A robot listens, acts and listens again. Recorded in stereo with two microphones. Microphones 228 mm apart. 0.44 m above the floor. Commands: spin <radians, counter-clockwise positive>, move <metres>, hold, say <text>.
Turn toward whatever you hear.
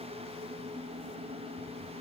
hold
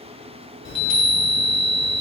spin 1.05
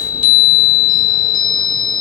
spin 0.52
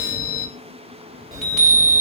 say Facing the chime.